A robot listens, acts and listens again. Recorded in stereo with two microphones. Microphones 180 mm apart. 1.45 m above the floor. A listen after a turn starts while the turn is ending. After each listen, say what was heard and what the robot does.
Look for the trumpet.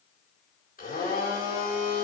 Keep listening.
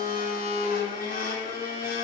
Keep listening.
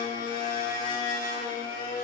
I can't make out a trumpet, only a blender.